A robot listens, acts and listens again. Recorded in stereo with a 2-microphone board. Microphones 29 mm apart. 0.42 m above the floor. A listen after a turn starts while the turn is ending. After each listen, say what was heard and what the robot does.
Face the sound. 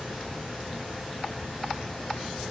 Keep listening.
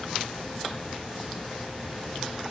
Keep listening.
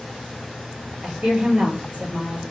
The woman speaking: about 60° right or 120° right. Turn 60° right.
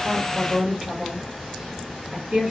So it is at 40° right. Turn 40° right.
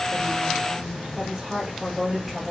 Found it: a woman speaking, straight ahead.